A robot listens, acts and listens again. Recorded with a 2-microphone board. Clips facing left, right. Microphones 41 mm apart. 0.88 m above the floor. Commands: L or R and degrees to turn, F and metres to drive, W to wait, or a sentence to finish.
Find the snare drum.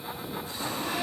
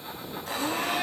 W
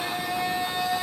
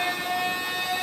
W
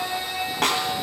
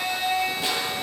L65
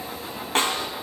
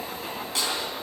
L45
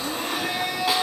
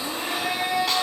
W
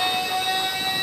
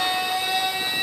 W
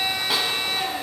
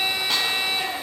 I heard a snare drum from this way, but can't make it out now.